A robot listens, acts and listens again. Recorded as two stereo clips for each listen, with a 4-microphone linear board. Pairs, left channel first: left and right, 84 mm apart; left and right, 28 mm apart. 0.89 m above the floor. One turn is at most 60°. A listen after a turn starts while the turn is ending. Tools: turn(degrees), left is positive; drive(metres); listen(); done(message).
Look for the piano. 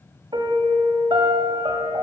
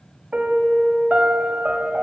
turn(degrees=-60)
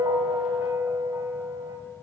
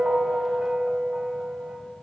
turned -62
turn(degrees=-40)
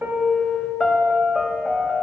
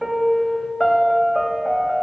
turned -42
done("Found it: a piano, straight ahead, 1 to 2 m away.")